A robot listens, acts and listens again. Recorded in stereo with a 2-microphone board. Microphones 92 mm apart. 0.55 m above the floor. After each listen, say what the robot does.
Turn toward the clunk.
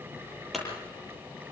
Turn 30° left.
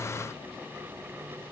Keep listening.
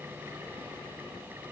I heard a clunk, but can't make it out now. It was about 30° right or 150° left.